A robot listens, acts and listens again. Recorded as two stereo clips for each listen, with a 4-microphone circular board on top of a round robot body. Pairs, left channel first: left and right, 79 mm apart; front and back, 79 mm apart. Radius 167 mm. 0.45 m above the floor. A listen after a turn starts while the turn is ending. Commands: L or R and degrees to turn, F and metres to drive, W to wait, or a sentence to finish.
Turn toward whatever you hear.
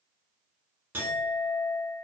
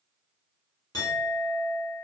R35
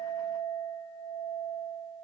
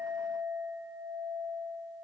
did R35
Facing the clink.